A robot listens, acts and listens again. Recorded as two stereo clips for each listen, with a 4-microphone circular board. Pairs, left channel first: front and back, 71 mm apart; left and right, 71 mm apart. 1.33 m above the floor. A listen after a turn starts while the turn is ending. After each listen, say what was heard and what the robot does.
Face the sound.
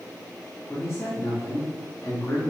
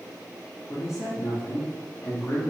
The man speaking: 35° left. Turn 35° left.
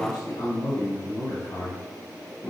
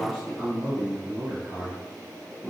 Found it: a man speaking, straight ahead, 2 to 4 m away.